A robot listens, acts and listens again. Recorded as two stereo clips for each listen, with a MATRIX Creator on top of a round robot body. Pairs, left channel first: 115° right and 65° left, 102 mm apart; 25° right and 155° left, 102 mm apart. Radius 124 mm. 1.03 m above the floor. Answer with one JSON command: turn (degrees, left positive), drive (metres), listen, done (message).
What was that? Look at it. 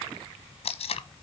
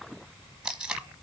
{"turn": -120}
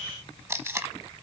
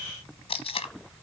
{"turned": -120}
{"done": "Facing the tape being pulled, 1 to 2 m away."}